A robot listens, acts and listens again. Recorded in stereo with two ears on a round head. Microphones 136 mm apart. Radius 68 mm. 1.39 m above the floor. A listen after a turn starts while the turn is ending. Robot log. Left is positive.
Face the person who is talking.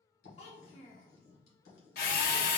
note: The child speaking: about 45° left or 135° left.
cmd yaw +45
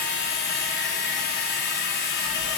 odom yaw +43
cmd idle
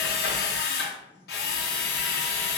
cmd idle
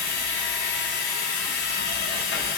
end: I heard a child speaking, but can't make it out now. It was about straight ahead or 95° left.